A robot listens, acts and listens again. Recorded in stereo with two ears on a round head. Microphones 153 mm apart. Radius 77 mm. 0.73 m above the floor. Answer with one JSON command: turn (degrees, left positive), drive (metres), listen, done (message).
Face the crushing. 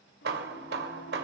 {"listen": true}
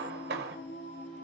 {"listen": true}
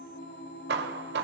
{"done": "I can't make out crushing, only singing and hammering."}